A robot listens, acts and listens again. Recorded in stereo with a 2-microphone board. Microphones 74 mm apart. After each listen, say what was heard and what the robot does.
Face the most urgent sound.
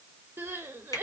The crying: about 30° right or 150° right. Turn 30° right.
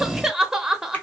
So it is at 10° right. Turn 10° right.
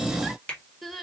Facing the crying.